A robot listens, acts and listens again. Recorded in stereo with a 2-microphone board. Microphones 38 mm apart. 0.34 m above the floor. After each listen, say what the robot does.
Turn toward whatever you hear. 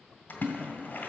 Turn 50° left.
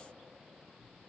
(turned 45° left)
Keep listening.
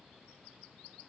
I heard a splash, but can't make it out now. It was about 5° left or 85° left.